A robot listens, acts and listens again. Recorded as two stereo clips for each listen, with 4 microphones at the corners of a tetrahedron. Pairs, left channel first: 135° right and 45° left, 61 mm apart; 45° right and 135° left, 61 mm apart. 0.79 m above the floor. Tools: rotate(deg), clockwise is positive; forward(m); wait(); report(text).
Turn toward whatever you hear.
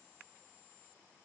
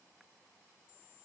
wait()
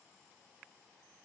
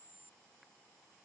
wait()
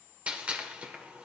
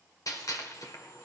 rotate(25)
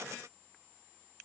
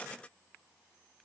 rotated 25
report("Facing where the gunshot came from. I can't hear it now.")